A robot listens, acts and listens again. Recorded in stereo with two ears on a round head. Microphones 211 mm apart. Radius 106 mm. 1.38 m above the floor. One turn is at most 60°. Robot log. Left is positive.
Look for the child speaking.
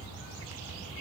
cmd idle
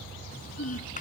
note: The child speaking: about 35° left or 145° left.
cmd yaw +35
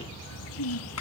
note: So it is at 110° left.
cmd yaw +60
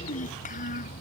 note: The child speaking is now 30° left.
cmd yaw +30
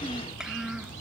end: Found it: a child speaking, straight ahead.